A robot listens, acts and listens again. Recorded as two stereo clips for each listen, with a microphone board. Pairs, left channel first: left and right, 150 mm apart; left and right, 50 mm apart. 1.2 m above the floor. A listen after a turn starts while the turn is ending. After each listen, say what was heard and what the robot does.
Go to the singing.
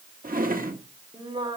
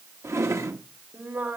The singing: about 35° right or 145° right. Turn 35° right.
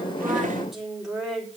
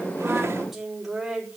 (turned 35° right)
Drive 1.0 m forward.
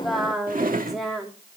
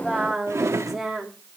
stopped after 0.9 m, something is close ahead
Something is in my way. I am facing the singing but have not reached it.